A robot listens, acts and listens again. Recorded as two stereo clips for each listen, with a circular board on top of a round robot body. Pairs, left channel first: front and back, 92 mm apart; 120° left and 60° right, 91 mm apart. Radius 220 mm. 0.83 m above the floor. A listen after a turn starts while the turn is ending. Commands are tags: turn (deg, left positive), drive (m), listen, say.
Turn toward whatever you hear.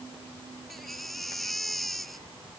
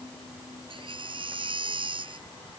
<turn deg="-90"/>
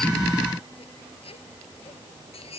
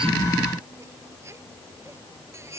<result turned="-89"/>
<say>Facing the baby crying.</say>